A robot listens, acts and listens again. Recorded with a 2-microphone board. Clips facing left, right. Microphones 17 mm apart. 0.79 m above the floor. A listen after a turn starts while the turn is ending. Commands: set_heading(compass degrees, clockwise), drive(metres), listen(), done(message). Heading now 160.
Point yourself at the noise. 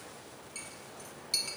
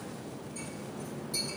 set_heading(90)
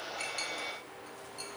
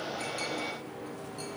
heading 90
listen()
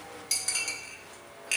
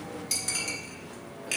set_heading(80)
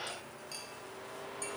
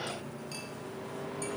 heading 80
listen()
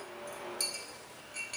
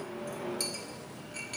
done("Found it: a clink, straight ahead.")